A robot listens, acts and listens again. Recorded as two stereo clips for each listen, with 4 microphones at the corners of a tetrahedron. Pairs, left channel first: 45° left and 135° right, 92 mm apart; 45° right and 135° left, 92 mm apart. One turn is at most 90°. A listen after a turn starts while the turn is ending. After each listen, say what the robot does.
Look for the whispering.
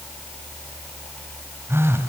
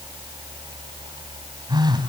Keep listening.
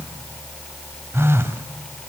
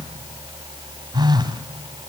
Keep listening.
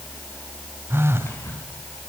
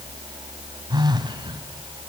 Turn 90° left.
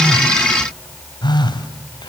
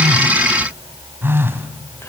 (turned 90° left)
Turn 15° left.
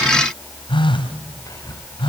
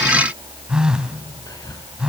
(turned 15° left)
Found it: whispering, straight ahead, over 4 m away.